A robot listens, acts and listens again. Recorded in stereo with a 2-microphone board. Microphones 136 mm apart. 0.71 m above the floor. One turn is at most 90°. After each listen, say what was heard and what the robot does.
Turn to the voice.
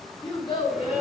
The child speaking: about 35° left or 145° left. Turn 35° left.
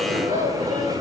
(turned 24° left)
So it is at 125° left. Turn 90° left.
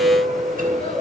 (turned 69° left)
Nothing new. It was at 55° left. Turn 55° left.
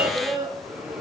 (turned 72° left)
The child speaking is now 20° right. Turn 20° right.
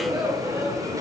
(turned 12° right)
Nothing new. It was at 10° right. Turn 10° right.
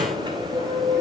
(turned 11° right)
Keep listening.
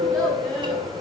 Facing where the child speaking came from. I can't hear it now.